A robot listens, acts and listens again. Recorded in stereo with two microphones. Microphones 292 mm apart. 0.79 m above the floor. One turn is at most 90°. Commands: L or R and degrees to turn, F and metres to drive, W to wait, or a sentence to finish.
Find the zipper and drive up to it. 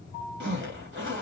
R45
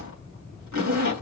R90
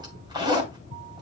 R15
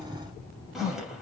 F1.0
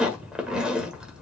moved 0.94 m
F1.0
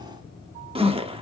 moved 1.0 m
R20
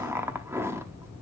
R10
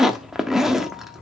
F1.0
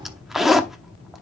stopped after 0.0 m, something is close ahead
I am next to the zipper.